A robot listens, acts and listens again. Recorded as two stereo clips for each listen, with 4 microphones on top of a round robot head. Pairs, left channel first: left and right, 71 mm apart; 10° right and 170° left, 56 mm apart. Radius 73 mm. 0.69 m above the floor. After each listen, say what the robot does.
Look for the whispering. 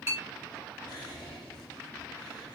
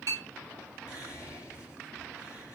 Turn 30° left.
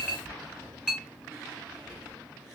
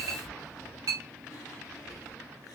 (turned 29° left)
Facing the whispering, 2 to 4 m away.